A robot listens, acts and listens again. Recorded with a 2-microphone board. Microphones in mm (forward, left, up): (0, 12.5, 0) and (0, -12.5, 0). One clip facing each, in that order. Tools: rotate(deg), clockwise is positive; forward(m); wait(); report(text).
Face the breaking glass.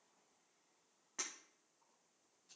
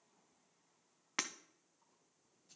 rotate(90)
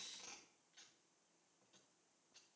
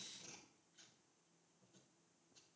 report("Facing where the breaking glass came from. I can't hear it now.")